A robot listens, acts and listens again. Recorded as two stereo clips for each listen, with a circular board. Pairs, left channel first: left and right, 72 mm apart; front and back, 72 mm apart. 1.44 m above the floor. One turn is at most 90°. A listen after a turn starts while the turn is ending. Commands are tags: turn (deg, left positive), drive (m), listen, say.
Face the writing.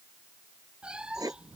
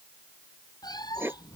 <turn deg="-90"/>
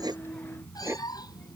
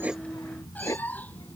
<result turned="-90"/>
<turn deg="-40"/>
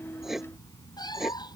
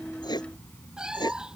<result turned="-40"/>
<say>Facing the writing.</say>